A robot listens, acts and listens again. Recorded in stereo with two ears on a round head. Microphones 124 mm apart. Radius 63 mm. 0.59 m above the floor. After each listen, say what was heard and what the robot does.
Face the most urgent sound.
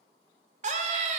The scream: about 55° right or 125° right. Turn 55° right.
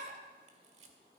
So it is at 60° right. Turn 60° right.
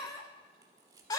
The scream is now 30° left. Turn 30° left.
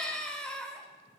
Facing the scream, 1 to 2 m away.